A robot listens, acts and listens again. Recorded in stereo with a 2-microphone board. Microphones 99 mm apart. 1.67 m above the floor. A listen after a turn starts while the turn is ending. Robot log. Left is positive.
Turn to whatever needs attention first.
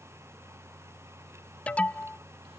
cmd yaw +30
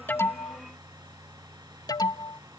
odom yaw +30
note: So it is at 135° left.
cmd yaw +135
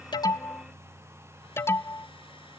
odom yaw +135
note: The alarm is now 25° left.
cmd yaw +25
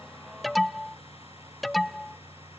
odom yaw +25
end: Facing the alarm.